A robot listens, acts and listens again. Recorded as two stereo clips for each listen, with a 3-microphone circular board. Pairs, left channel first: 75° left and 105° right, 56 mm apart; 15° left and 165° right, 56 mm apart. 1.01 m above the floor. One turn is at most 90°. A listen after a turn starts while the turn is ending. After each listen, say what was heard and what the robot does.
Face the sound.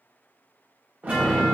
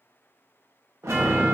The chime: 165° right. Turn 90° right.
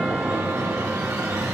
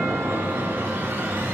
The chime is now 115° right. Turn 90° right.
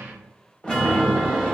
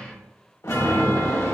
Found it: a chime, straight ahead, 1 to 2 m away.